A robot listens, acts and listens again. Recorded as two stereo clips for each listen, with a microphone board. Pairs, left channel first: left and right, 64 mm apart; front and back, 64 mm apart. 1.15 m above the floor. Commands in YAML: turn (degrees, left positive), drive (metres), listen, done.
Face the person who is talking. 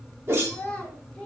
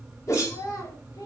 turn: 20
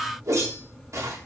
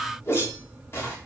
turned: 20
listen: true
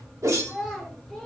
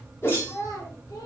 done: "Facing the child speaking, 2 to 4 m away."